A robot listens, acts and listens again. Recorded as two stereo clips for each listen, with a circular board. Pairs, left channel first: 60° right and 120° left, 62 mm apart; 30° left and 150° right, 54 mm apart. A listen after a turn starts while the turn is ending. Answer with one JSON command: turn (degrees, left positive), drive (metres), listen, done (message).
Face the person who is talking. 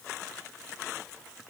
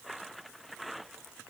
{"listen": true}
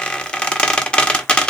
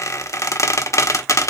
{"listen": true}
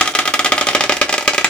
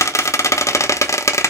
{"done": "I can't make out anyone speaking to turn to."}